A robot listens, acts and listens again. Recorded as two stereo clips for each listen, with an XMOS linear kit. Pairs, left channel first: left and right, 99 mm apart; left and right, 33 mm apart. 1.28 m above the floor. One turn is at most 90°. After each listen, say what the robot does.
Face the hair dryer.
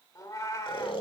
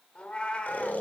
Keep listening.
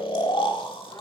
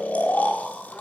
Keep listening.
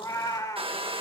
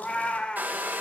Turn 70° right.
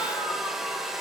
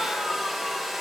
Found it: a hair dryer, straight ahead.